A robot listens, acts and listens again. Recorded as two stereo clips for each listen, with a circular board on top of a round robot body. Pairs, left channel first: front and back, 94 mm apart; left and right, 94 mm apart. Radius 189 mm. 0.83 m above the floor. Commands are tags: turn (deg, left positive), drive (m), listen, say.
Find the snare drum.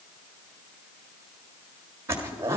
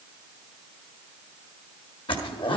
<listen/>
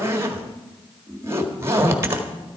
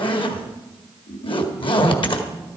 <listen/>
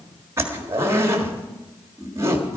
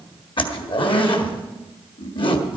<say>I can't make out a snare drum, only a zipper.</say>